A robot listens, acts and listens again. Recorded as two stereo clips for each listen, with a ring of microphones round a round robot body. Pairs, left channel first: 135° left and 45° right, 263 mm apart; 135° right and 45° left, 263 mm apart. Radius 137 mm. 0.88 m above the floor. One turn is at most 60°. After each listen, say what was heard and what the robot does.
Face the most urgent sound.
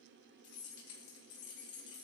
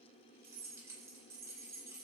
Keep listening.
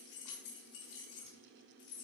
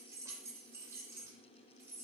Keep listening.
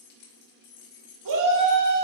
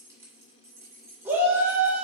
The shout: 40° right. Turn 40° right.
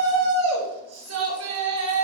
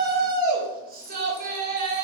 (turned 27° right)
The shout is now 10° right. Turn 10° right.
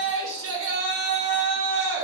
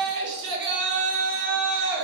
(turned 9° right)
Facing the shout.